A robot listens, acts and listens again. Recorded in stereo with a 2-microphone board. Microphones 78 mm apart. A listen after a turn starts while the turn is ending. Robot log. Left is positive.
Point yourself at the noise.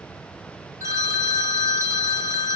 note: The phone ringing: about 40° right or 140° right.
cmd yaw -40
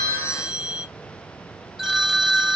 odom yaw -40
note: So it is at 10° right.
cmd yaw -10
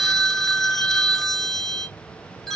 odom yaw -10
end: Facing the phone ringing, under 1 m away.